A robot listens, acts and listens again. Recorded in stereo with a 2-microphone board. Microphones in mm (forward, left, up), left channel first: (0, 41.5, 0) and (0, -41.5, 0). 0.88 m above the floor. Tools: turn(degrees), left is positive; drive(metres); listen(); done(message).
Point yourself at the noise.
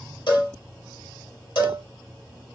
turn(degrees=65)
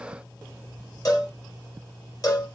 turn(degrees=45)
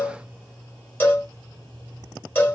turn(degrees=25)
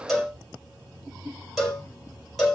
done("Found it: a cowbell, straight ahead.")